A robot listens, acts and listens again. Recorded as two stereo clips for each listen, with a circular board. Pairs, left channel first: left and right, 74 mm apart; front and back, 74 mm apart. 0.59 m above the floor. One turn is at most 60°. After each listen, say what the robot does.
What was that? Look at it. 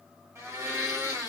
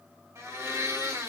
Turn 60° right.
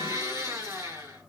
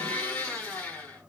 Turn 60° right.
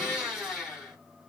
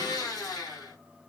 Facing the blender.